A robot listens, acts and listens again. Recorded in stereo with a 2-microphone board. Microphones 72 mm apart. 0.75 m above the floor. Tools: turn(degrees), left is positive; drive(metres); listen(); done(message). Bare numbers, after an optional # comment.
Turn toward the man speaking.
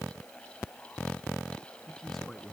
turn(30)
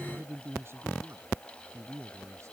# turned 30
# So it is at 40° right.
turn(-40)
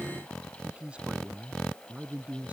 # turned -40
# The man speaking is now 20° right.
turn(-20)
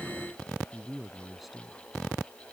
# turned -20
done("Facing the man speaking.")